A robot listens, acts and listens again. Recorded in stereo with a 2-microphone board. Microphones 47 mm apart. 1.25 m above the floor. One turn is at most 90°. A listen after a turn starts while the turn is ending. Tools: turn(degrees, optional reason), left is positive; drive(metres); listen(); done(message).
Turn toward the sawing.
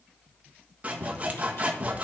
turn(degrees=-30, reason="The sawing: about 30° right or 150° right.")
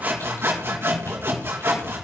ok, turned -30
turn(degrees=-90, reason="So it is at 120° right.")
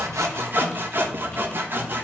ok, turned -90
turn(degrees=-45, reason="The sawing is now 45° right.")
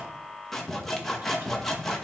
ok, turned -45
turn(degrees=10, reason="The sawing is now 10° left.")
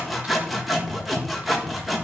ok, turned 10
done("Found it: sawing, straight ahead.")